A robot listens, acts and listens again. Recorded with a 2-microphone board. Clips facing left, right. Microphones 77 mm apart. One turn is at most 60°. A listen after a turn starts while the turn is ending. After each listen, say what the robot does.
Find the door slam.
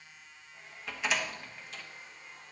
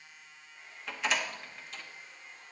Turn 30° left.
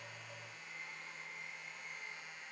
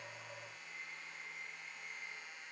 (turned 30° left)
Keep listening.
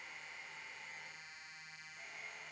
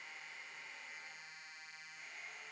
I heard a door slam, but can't make it out now. It was about 30° right or 150° left.